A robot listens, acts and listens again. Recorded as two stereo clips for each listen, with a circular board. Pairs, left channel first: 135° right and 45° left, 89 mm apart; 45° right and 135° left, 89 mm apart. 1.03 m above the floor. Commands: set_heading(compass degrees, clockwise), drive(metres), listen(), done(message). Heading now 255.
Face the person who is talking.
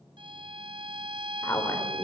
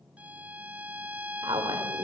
set_heading(85)
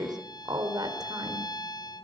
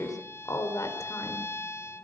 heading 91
done("Facing the woman speaking, 2 to 4 m away.")